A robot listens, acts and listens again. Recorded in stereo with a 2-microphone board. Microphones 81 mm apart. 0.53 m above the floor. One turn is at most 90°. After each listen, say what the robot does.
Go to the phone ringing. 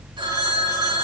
Turn 90° right.
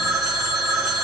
Drive 1.0 m forward.
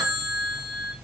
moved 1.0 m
Drive 1.0 m forward.
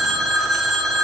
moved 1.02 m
Drive 1.0 m forward.
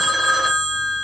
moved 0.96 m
Drive 1.0 m forward.
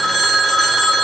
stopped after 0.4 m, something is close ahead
I am next to the phone ringing.